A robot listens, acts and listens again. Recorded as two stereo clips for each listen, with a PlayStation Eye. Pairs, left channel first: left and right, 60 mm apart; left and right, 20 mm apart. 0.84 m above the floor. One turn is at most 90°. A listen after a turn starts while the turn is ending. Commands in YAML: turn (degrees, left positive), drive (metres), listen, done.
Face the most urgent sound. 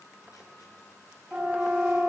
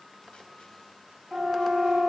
turn: -20
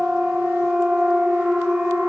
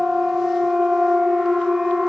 done: "Found it: a siren, straight ahead."